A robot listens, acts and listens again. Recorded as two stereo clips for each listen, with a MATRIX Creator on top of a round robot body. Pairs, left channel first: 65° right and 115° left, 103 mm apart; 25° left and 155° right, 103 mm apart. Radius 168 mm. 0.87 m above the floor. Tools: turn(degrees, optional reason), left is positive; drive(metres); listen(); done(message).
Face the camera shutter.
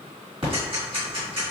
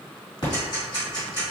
listen()
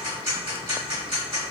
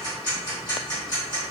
listen()
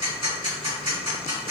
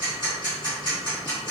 done("I can't make out a camera shutter, only ticking.")